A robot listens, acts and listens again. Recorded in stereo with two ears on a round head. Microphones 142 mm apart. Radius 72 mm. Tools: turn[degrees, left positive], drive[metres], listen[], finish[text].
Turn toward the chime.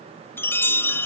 Action: turn[30]
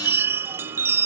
Thought: So it is at 15° right.
Action: turn[-15]
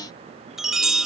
Action: finish[Facing the chime.]